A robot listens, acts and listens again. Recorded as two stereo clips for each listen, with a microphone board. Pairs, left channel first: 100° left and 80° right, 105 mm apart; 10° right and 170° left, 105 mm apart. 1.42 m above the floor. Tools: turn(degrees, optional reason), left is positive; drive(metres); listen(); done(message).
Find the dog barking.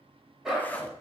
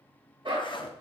turn(degrees=-165, reason="The dog barking: 165° right.")
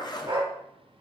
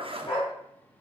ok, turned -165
turn(degrees=-40, reason="The dog barking is now 40° right.")
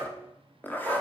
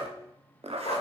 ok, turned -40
turn(degrees=-10, reason="The dog barking is now 10° right.")
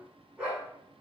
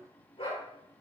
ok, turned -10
done("Facing the dog barking.")